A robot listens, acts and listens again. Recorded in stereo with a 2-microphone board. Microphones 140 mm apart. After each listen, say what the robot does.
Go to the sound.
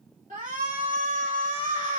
Turn 70° right.
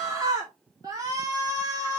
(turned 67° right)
Turn 30° right.
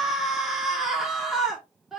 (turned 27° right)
Drive 1.0 m forward.
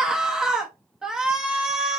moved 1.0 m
Drive 1.0 m forward.
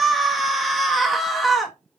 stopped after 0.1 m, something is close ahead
I am next to the shout.